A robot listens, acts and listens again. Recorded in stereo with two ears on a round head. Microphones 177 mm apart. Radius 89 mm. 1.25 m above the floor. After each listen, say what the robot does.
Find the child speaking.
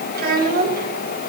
Turn 50° right.
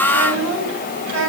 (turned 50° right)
Turn 85° right.
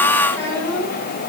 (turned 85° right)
Turn 10° left.
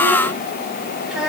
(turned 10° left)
Facing the child speaking.